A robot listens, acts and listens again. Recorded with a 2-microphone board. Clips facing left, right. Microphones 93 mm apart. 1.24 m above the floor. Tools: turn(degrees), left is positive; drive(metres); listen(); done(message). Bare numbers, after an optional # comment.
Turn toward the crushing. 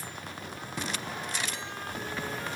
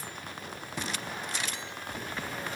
listen()
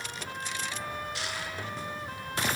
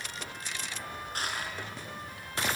# The crushing: about 45° right or 135° right.
turn(-45)
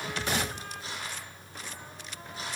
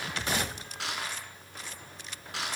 # So it is at 90° right.
turn(-90)
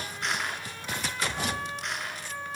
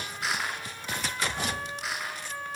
done("Facing the crushing.")